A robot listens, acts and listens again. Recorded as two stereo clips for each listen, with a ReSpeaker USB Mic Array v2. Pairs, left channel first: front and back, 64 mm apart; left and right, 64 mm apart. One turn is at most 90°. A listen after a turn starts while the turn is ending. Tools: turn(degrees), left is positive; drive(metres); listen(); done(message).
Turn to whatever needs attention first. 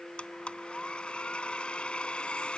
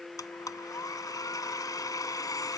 listen()
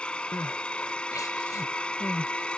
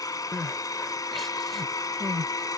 done("Found it: crying, straight ahead.")